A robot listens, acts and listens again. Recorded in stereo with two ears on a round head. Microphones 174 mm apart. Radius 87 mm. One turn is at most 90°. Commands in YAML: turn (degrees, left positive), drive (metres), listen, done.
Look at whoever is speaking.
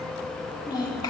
turn: 20
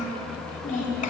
turn: 90
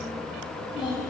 turn: 30
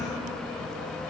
listen: true
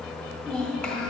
turn: 10
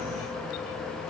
listen: true
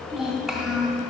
done: "Found it: a child speaking, straight ahead, 2 to 4 m away."